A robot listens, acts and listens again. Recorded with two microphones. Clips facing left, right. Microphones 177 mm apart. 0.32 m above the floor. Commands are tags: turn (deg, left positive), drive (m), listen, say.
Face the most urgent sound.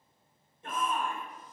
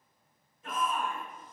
<turn deg="30"/>
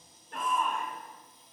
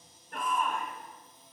<say>Found it: a shout, straight ahead.</say>